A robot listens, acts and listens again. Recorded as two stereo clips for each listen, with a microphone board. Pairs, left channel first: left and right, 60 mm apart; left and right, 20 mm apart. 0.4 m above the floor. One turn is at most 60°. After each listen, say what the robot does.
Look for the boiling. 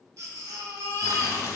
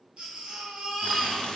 Turn 60° left.
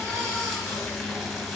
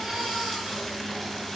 Found it: boiling, straight ahead.